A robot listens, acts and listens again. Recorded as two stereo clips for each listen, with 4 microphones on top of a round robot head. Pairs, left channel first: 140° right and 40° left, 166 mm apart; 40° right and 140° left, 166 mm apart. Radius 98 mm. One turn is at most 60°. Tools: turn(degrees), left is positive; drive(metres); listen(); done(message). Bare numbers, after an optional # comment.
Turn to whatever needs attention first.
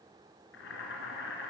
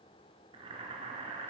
listen()
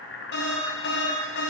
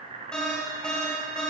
# The alarm: 125° right.
turn(-60)
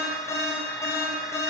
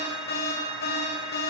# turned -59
# The alarm is now 65° right.
turn(-60)
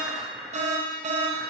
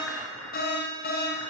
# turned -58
# The alarm is now 10° right.
turn(-10)
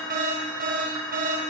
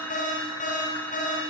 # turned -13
done("Facing the alarm, 1 to 2 m away.")